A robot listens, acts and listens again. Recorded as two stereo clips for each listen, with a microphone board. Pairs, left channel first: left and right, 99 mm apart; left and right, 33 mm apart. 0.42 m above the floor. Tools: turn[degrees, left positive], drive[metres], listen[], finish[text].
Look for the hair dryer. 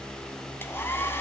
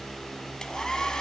Thought: The hair dryer: about 25° left or 155° left.
Action: turn[25]
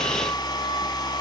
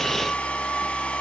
Thought: So it is at 135° left.
Action: turn[135]
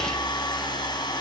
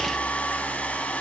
Thought: The hair dryer is now 50° left.
Action: turn[50]
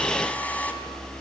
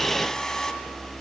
Thought: The hair dryer is now 15° left.
Action: turn[15]
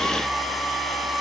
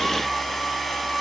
Action: finish[Found it: a hair dryer, straight ahead.]